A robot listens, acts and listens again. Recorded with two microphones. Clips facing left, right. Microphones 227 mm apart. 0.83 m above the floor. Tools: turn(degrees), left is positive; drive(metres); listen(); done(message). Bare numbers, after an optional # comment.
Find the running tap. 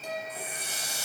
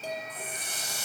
turn(30)
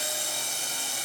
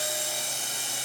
# So it is at 20° right.
turn(-20)
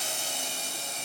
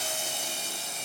done("Found it: a running tap, straight ahead.")